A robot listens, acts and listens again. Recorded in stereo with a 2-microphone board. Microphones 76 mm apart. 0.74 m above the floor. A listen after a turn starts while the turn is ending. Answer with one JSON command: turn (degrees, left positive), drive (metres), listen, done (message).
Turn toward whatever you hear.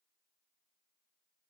{"listen": true}
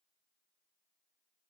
{"listen": true}
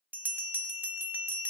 {"turn": -25}
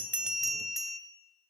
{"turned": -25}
{"done": "Found it: a bell, straight ahead, under 1 m away."}